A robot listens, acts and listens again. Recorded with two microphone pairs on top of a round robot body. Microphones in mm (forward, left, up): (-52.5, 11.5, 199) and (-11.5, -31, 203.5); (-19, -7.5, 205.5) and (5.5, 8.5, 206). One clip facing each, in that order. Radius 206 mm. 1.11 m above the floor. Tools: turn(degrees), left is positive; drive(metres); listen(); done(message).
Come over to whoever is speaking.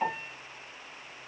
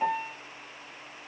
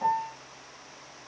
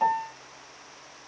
listen()
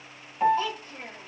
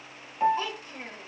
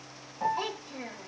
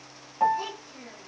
turn(degrees=-105)
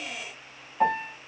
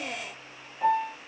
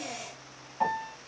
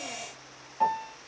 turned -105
listen()
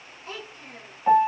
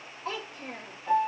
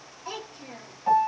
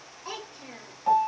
turn(degrees=-35)
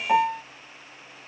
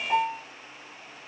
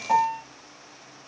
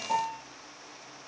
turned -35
listen()
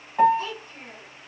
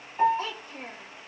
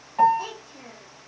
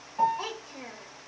turn(degrees=15)
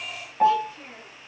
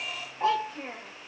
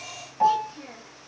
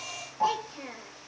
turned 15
drive(metres=1.0)
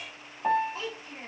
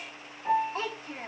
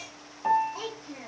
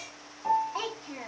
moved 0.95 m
drive(metres=1.0)
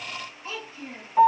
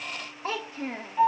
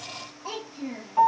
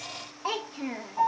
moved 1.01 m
drive(metres=1.0)
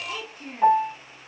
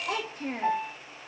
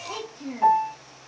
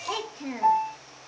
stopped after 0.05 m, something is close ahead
done("Arrived at the child speaking, straight ahead.")